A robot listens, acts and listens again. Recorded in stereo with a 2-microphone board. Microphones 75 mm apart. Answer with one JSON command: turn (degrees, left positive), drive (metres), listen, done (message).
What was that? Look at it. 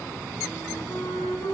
{"turn": 65}
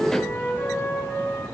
{"turn": 40}
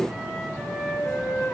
{"done": "Found it: a flute, straight ahead."}